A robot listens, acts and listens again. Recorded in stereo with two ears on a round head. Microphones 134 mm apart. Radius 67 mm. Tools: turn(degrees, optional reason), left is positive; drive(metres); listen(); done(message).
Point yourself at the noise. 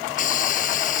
turn(degrees=60, reason="The hiss: about 60° left or 120° left.")
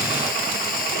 listen()
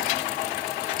turn(degrees=60, reason="So it is at 60° left.")
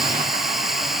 done("Found it: a hiss, straight ahead.")